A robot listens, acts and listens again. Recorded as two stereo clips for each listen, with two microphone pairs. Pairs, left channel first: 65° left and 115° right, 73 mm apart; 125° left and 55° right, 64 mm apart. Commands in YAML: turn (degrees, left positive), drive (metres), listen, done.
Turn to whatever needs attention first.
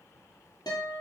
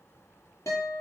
listen: true
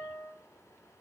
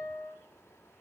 listen: true
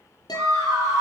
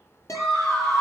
turn: -160
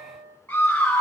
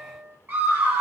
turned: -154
done: "Facing the scream."